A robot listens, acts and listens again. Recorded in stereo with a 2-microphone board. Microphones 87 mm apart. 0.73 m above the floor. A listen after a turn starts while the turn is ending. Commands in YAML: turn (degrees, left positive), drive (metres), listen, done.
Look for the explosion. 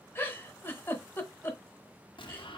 turn: 65
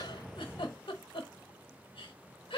listen: true
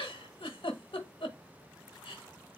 done: "I heard an explosion, but can't make it out now. It was about straight ahead or 50° left."